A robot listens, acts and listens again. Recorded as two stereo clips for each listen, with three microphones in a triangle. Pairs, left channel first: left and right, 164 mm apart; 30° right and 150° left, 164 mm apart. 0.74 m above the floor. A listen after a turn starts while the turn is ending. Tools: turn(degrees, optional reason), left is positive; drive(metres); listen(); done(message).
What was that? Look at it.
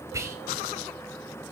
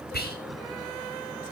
turn(degrees=-15, reason="The whispering: 15° right.")
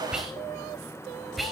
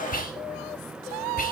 done("Found it: whispering, straight ahead.")